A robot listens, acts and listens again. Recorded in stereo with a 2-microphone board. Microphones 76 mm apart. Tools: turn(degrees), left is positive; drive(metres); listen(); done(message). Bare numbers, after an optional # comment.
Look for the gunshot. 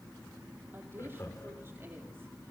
listen()
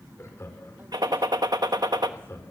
# The gunshot: about 65° right or 115° right.
turn(-65)
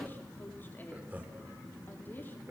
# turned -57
listen()
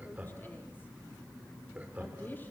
done("I heard a gunshot, but can't make it out now. It was about 5° right or 60° right.")